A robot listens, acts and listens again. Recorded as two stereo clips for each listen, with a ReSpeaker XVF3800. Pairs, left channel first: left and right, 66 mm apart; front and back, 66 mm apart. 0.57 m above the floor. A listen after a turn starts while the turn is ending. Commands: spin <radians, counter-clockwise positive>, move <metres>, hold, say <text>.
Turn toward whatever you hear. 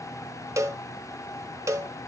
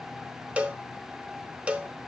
spin -1.92
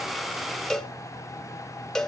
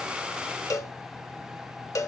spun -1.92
spin 0.17
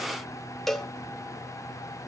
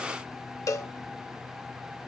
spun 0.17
say Found it: a cowbell, straight ahead.